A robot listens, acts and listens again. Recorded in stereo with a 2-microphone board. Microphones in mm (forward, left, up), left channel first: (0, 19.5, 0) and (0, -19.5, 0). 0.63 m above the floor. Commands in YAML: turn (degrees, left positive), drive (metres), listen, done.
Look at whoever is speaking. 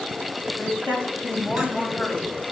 turn: 50
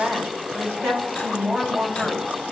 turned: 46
turn: 10
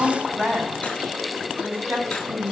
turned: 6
done: "Found it: a woman speaking, straight ahead."